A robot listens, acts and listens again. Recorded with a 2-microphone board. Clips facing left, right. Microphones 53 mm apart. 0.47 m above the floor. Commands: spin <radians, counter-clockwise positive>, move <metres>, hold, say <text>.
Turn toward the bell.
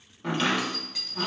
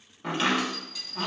spin 0.96
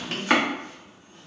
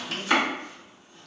spin 0.79
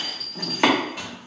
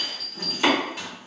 say Found it: a bell, straight ahead, 1 to 2 m away.